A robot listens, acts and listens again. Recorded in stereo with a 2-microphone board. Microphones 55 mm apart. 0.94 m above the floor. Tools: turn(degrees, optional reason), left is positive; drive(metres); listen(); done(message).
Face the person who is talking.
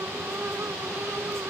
listen()
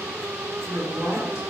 turn(degrees=75, reason="The woman speaking: about 75° left or 105° left.")
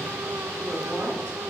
listen()
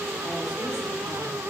listen()
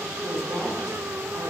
turn(degrees=10, reason="So it is at 10° left.")
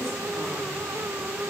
listen()
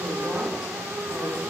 listen()
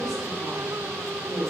done("Found it: a woman speaking, straight ahead, over 4 m away.")